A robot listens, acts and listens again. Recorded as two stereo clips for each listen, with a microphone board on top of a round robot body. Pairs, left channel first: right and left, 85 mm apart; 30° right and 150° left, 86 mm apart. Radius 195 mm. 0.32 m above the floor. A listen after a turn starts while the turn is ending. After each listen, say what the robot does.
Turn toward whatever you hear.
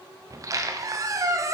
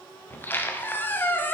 Turn 40° left.
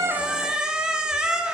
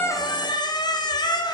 Turn 10° left.
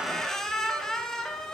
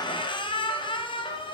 Found it: a squeak, straight ahead, under 1 m away.